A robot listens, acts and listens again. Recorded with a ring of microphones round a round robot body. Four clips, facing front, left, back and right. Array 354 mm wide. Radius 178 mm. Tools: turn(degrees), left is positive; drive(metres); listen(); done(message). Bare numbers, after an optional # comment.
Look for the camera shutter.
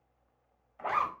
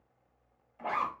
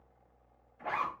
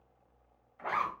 listen()
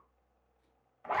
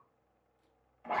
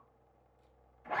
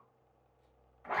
listen()
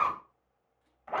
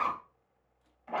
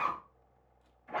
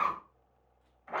done("I can't make out a camera shutter, only a zipper.")